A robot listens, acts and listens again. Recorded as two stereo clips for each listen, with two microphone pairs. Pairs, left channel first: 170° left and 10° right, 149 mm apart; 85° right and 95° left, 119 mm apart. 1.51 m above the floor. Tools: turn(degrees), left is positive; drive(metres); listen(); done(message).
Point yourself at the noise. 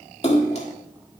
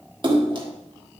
turn(degrees=140)
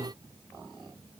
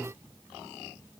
done("I heard a splash from this way, but can't make it out now.")